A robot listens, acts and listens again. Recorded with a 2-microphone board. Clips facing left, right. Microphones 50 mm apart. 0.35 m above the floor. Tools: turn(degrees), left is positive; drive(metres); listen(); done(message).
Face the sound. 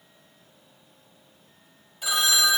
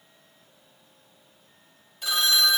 turn(degrees=30)
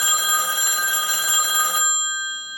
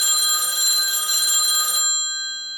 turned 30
turn(degrees=145)
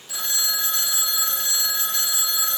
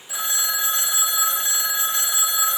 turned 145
turn(degrees=-20)
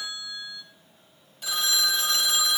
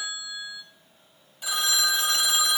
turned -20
done("Found it: a phone ringing, straight ahead, under 1 m away.")